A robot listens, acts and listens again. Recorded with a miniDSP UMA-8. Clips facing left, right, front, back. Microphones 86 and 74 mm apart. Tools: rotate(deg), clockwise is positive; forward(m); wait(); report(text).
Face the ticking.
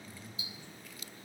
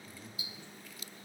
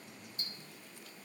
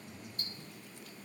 rotate(-150)
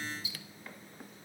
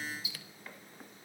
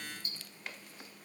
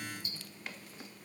rotate(-40)
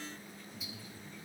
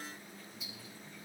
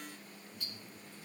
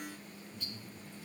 report("Facing the ticking.")